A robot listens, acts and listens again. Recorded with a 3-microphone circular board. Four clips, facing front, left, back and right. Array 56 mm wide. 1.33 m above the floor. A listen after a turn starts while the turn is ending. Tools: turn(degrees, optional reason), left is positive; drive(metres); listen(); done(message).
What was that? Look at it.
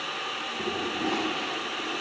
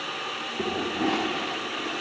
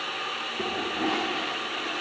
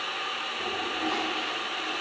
turn(degrees=130, reason="The toilet flushing: 130° left.")
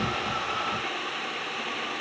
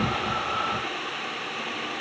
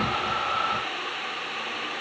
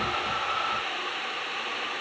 listen()
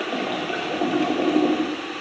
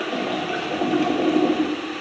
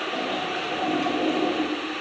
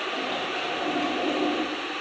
turn(degrees=35, reason="The toilet flushing is now 35° left.")
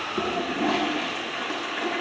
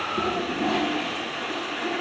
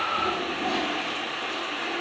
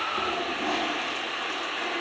done("Found it: a toilet flushing, straight ahead, under 1 m away.")